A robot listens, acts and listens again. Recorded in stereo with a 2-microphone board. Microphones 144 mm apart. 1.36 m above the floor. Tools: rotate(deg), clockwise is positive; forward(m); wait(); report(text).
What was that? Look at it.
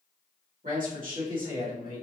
rotate(75)
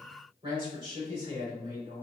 rotate(30)
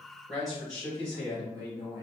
report("Found it: a man speaking, straight ahead.")